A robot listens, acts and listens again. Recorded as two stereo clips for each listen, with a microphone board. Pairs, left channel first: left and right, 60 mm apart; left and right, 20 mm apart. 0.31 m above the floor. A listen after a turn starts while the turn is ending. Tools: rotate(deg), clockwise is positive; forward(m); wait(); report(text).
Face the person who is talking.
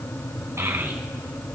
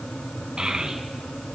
rotate(50)
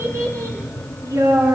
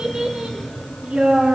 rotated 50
rotate(75)
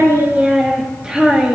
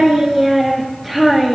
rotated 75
rotate(15)
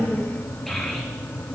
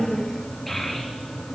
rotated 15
report("Facing the child speaking.")